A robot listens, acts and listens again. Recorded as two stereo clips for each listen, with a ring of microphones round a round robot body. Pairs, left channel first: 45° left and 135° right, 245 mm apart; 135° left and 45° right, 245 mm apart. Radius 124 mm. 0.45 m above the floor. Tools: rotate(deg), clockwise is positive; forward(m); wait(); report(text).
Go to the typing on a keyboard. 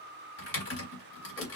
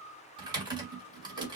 rotate(-25)
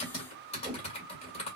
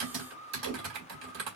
rotate(15)
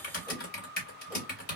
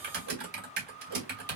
forward(1.0)
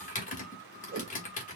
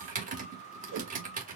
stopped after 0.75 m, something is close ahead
report("Arrived at the typing on a keyboard, straight ahead.")